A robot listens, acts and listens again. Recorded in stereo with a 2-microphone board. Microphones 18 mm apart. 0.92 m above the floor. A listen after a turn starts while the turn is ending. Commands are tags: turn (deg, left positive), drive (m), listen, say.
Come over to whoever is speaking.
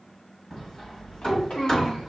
<turn deg="70"/>
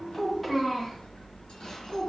<drive m="1.0"/>
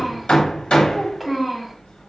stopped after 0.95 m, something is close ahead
<say>I am next to the child speaking.</say>